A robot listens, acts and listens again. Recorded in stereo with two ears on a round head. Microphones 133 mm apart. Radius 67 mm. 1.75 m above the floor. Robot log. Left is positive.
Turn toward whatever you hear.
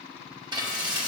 note: The frying: about 30° right or 150° right.
cmd yaw -30
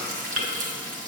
note: So it is at 120° right.
cmd yaw -120
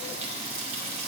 note: The frying is now 40° right.
cmd yaw -40
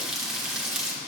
end: Found it: frying, straight ahead, 1 to 2 m away.